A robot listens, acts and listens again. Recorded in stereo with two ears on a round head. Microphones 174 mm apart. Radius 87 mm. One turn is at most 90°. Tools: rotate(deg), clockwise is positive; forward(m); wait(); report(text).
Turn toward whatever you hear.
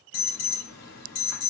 rotate(-70)
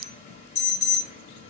rotate(-40)
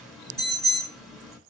report("Found it: an alarm, straight ahead, 2 to 4 m away.")